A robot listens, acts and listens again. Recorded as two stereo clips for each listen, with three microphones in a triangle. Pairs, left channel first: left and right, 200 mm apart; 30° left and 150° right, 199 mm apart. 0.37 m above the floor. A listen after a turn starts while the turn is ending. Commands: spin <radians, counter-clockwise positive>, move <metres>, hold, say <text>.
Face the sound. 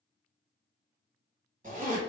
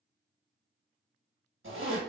spin -2.44
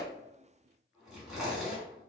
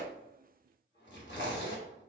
say Facing the zipper.